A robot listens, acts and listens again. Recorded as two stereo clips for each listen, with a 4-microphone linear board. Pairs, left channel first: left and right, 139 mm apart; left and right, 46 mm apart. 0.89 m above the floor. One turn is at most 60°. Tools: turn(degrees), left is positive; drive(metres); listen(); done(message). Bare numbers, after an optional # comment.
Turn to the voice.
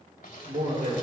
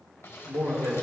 # The man speaking: about 65° right or 115° right.
turn(-60)
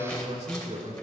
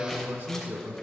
# So it is at 50° right.
turn(-50)
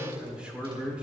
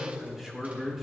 # The man speaking is now 10° right.
turn(-10)
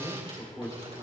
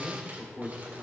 done("Facing the man speaking.")